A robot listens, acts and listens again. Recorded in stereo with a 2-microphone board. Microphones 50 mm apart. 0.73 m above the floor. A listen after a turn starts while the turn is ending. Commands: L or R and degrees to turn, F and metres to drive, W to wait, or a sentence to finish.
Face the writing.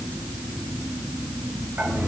W
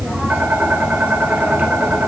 W
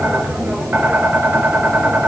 I can't make out writing to turn to.